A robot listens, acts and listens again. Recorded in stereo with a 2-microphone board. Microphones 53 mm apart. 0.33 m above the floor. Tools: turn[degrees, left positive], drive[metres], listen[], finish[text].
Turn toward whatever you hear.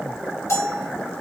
Thought: The bell: about 60° left or 120° left.
Action: turn[60]
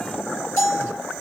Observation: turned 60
Thought: So it is at 65° left.
Action: turn[65]
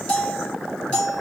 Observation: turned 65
Thought: The bell is now 15° left.
Action: turn[15]
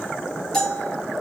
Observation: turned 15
Action: finish[Found it: a bell, straight ahead.]